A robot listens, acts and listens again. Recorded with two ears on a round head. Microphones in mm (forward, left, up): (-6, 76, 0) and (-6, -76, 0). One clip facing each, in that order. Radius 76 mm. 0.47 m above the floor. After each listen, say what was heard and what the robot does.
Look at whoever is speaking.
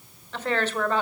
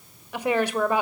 Turn 30° right.
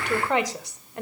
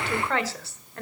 So it is at 20° left. Turn 20° left.
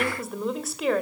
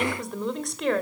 Found it: a woman speaking, straight ahead.